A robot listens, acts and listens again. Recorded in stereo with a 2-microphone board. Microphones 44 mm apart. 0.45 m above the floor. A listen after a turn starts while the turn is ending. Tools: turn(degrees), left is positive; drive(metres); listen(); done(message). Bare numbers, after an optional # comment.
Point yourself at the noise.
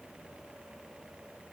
listen()
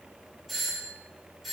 turn(30)
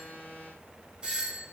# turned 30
# So it is at 30° right.
turn(-30)
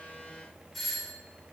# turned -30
done("Facing the doorbell, 1 to 2 m away.")